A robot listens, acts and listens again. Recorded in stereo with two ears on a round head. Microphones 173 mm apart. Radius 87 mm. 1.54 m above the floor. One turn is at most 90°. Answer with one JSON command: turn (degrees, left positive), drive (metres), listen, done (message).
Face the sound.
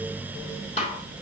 {"turn": 30}
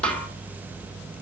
{"done": "Facing the snare drum."}